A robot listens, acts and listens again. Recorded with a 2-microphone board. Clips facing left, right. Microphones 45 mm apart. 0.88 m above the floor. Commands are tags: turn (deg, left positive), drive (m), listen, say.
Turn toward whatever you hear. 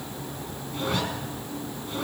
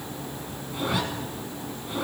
<turn deg="-30"/>
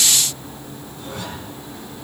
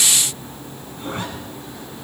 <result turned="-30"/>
<turn deg="-145"/>
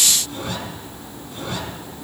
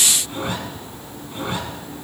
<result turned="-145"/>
<turn deg="-25"/>
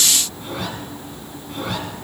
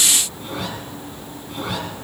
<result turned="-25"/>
<say>Facing the zipper.</say>